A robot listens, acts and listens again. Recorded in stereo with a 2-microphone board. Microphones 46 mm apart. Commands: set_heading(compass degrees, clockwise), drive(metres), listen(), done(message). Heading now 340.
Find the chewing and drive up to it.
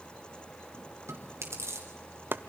set_heading(70)
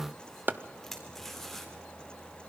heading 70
drive(1.0)
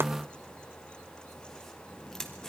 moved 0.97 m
set_heading(60)
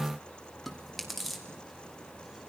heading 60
drive(1.0)
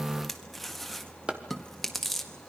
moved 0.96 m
drive(1.0)
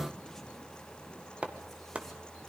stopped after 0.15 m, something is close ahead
listen()
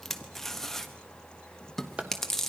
done("I am next to the chewing.")